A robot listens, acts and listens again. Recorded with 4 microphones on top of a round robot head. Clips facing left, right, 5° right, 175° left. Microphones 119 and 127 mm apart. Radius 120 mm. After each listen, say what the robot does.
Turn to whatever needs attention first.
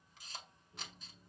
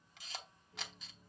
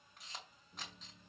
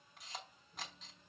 Keep listening.
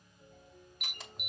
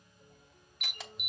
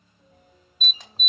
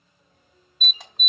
Turn 50° left.
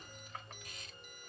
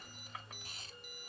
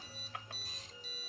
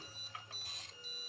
Keep listening.
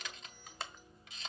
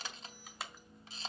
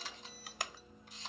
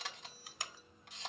Facing the alarm.